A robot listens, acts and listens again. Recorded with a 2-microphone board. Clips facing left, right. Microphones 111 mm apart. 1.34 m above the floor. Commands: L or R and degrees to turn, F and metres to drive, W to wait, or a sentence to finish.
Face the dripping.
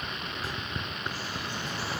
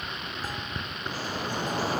R40
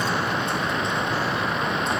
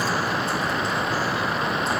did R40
Facing the dripping.